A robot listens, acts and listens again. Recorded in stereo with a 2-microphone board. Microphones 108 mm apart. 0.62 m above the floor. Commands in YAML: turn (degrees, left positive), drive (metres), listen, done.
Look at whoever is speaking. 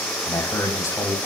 turn: 30
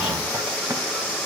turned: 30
listen: true
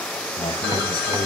turn: 115
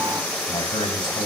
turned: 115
turn: 50
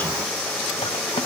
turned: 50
listen: true
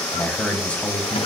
turn: 15
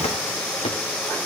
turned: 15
listen: true
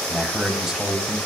done: "Found it: a man speaking, straight ahead."